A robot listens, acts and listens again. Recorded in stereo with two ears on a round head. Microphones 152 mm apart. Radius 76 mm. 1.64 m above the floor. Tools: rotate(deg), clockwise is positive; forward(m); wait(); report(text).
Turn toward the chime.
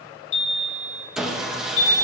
rotate(-90)
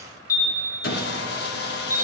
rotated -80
rotate(-15)
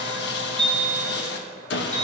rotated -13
report("Facing the chime, 2 to 4 m away.")